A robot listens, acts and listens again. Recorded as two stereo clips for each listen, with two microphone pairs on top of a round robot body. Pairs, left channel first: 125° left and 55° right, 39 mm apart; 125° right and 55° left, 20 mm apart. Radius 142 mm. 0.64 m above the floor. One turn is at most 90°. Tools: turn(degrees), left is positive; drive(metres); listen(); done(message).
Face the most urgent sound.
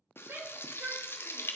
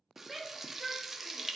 turn(degrees=-30)
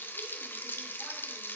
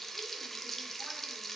listen()
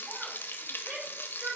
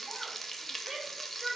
done("Facing the shout, 2 to 4 m away.")